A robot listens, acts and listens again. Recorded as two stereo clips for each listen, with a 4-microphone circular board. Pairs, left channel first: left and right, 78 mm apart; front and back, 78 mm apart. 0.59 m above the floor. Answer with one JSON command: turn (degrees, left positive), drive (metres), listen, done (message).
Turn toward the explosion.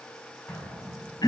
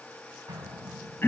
{"turn": 160}
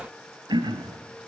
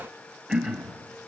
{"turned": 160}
{"done": "Facing where the explosion came from. I can't hear it now."}